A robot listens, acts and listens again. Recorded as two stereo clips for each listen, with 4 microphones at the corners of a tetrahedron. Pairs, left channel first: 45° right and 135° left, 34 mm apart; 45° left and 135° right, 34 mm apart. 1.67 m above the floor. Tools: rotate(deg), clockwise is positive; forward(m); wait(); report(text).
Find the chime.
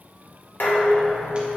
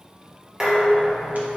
wait()
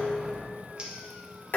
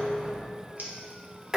wait()
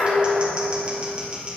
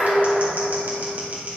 report("I can't make out a chime, only dishes clattering and scissors.")